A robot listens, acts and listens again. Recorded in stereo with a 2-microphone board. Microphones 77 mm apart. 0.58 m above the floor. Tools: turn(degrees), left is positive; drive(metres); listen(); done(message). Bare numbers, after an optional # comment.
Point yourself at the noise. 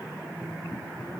listen()
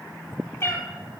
# The cat meowing: about 30° left or 150° left.
turn(30)
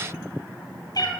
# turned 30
# So it is at 115° left.
turn(115)
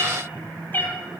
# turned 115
# The cat meowing is now 25° left.
turn(25)
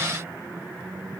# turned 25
listen()
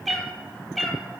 done("Found it: a cat meowing, straight ahead, 1 to 2 m away.")